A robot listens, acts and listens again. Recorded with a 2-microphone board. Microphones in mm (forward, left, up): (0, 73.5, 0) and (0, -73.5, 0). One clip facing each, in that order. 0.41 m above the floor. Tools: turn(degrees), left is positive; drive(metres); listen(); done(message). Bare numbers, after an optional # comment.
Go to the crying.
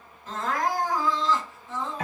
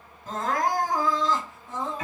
# The crying: about 45° right or 135° right.
turn(-45)
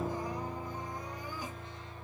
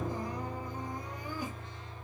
listen()
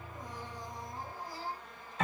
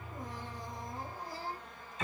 # So it is at 80° right.
turn(-80)
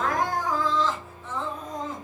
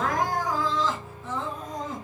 # The crying is now 10° right.
turn(-10)
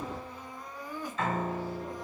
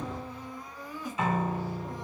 drive(1.0)
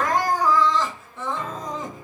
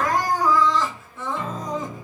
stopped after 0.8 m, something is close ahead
done("Arrived at the crying, straight ahead.")